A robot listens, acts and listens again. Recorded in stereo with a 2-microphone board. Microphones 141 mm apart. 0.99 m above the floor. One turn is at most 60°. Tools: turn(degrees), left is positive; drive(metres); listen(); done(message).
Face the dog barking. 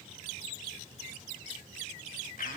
listen()
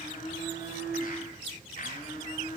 listen()
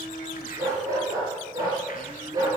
turn(degrees=-25)
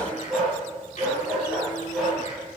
done("Found it: a dog barking, straight ahead, over 4 m away.")